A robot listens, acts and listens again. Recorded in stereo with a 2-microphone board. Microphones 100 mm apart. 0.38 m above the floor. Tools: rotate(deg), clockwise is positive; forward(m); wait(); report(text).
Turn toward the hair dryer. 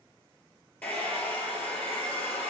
rotate(-30)
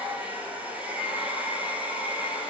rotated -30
rotate(15)
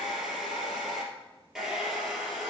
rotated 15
report("Facing the hair dryer, 2 to 4 m away.")